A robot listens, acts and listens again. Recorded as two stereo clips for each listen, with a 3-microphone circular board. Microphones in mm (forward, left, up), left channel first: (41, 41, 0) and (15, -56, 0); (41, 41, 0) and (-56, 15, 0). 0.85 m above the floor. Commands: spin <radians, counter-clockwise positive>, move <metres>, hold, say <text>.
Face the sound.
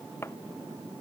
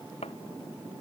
spin 0.17
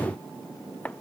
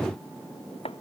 say Facing the chopping.